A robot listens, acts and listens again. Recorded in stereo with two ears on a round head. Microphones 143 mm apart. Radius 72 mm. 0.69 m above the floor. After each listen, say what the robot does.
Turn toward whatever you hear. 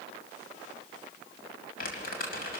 Turn 65° left.
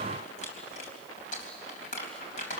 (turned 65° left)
Turn 50° left.
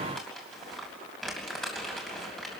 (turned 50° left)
Found it: crumpling, straight ahead, 2 to 4 m away.